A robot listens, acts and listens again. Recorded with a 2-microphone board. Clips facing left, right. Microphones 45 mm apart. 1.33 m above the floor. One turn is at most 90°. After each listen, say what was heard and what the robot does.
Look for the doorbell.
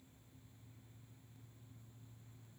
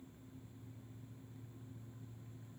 Keep listening.
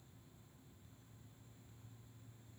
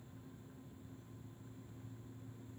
Keep listening.
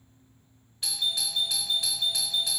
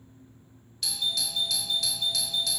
The doorbell: about 25° left or 155° left. Turn 25° left.
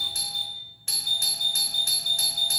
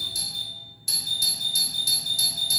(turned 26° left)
So it is at 125° left. Turn 90° left.
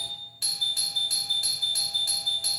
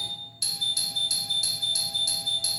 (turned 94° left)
The doorbell is now 35° left. Turn 35° left.
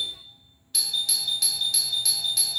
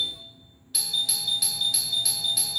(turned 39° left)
Facing the doorbell, 1 to 2 m away.